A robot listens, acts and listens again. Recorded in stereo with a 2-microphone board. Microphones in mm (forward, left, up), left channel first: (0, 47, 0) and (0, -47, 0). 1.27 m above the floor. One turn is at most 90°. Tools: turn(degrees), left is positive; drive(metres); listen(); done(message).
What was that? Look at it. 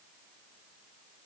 listen()
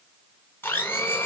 turn(degrees=20)
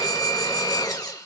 turn(degrees=90)
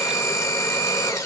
turn(degrees=45)
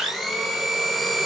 done("Facing the blender.")